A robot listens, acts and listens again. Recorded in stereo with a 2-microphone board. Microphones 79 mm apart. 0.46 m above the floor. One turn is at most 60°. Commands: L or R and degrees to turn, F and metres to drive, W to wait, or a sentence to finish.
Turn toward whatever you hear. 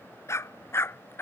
L30
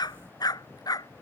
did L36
L60
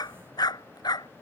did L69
L60
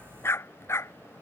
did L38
L35
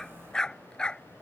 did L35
L10
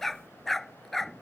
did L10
Facing the dog barking.